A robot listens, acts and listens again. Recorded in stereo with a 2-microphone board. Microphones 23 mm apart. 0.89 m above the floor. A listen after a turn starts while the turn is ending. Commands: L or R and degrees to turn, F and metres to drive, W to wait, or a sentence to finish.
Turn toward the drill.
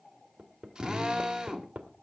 R30
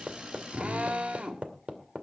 R115
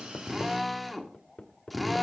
Found it: a drill, straight ahead, 2 to 4 m away.